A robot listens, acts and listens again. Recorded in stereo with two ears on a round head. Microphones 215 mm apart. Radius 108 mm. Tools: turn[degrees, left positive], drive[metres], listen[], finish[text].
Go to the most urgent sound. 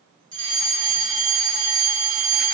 Thought: The fire alarm: about 20° right or 160° right.
Action: turn[-20]
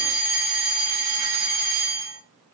Thought: So it is at 140° right.
Action: turn[-140]
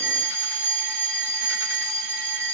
Action: drive[1.0]
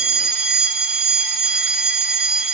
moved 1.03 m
Action: drive[1.0]
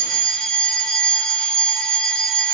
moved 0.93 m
Action: drive[1.0]
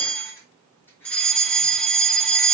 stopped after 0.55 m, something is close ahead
Action: finish[Arrived at the fire alarm, straight ahead.]